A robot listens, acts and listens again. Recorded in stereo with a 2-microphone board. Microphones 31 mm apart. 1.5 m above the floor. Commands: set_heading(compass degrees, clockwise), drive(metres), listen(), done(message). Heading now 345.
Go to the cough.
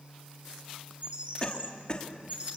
set_heading(315)
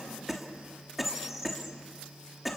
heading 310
drive(1.0)
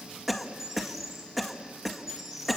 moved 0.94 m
drive(1.0)
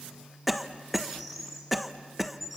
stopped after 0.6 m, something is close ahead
done("I am next to the cough.")